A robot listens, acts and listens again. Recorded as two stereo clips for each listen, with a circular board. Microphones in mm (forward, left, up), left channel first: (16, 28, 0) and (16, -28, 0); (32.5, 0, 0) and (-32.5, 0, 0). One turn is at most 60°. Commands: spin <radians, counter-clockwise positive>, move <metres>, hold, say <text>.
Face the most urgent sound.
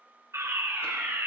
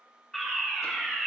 spin -1.05
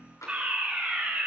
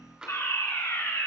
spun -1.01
spin -0.44
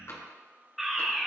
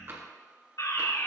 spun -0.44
say Facing the fire alarm, 2 to 4 m away.